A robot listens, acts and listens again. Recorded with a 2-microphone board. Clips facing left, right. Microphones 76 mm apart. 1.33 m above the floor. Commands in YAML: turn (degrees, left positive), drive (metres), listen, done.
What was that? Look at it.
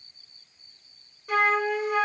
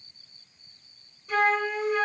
turn: 65
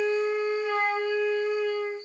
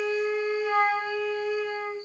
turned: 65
turn: 35
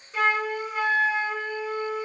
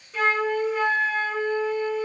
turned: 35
turn: 15
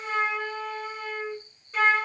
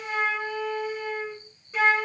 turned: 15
done: "Found it: a flute, straight ahead, under 1 m away."